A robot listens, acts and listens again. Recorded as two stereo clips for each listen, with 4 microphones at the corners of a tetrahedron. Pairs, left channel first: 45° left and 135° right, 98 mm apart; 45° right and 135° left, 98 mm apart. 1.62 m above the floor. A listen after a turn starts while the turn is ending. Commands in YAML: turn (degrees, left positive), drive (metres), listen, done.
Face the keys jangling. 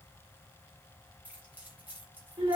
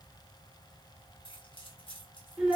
turn: -65
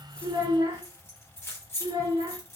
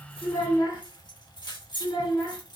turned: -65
turn: -15
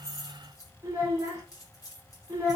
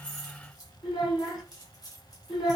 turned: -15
done: "Found it: keys jangling, straight ahead, 1 to 2 m away."